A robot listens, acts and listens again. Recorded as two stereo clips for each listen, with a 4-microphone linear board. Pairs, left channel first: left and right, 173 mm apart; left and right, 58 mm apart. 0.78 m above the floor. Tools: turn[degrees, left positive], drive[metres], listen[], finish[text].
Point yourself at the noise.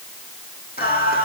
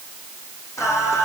Thought: The singing: about 60° left or 120° left.
Action: turn[60]
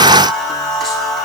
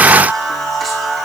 Action: finish[Found it: singing, straight ahead.]